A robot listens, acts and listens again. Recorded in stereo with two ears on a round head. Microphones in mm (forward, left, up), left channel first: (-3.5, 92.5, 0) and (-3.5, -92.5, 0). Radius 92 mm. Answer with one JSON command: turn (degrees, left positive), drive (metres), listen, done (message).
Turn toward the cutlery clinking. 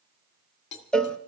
{"turn": 60}
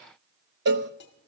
{"listen": true}
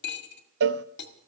{"turn": 60}
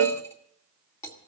{"turn": 15}
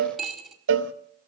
{"done": "Found it: cutlery clinking, straight ahead."}